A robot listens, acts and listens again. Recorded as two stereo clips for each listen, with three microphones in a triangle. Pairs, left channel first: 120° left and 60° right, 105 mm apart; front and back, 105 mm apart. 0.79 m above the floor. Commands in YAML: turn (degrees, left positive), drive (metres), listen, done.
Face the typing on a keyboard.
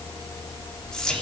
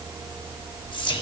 listen: true
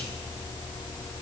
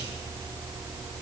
listen: true
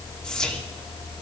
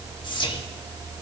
done: "I can't make out typing on a keyboard to turn to."